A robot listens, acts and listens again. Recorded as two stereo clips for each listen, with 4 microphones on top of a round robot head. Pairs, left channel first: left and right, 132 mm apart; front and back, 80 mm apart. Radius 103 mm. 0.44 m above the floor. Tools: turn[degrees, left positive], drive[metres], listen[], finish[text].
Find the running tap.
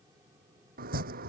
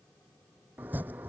Action: listen[]
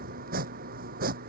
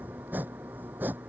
Action: listen[]
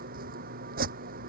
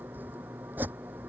Action: finish[I can't make out a running tap to turn to.]